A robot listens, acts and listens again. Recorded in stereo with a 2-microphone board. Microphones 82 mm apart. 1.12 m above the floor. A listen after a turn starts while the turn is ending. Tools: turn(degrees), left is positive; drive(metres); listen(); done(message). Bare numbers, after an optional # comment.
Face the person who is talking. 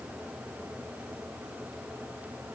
listen()
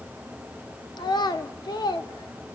# The child speaking: about 60° left or 120° left.
turn(60)
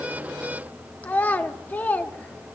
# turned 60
# So it is at 25° left.
turn(25)
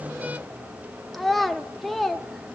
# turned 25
done("Facing the child speaking, under 1 m away.")